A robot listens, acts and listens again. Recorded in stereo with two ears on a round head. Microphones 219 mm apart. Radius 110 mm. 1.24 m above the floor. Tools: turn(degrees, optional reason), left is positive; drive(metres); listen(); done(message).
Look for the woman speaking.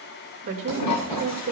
turn(degrees=-55, reason="The woman speaking: about 55° right or 125° right.")
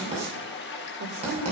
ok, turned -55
listen()
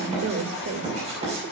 turn(degrees=-70, reason="So it is at 70° right.")
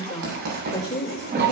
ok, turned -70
turn(degrees=15, reason="The woman speaking is now 15° left.")
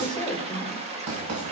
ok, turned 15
done("Found it: a woman speaking, straight ahead.")